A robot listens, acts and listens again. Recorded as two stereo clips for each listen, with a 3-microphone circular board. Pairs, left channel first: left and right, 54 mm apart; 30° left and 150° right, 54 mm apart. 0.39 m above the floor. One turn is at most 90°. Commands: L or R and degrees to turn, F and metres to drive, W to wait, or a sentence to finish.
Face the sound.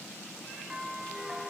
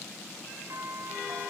R90
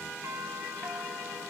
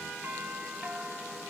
R90
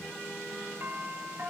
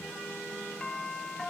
R50
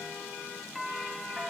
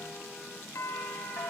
Found it: a doorbell, straight ahead, over 4 m away.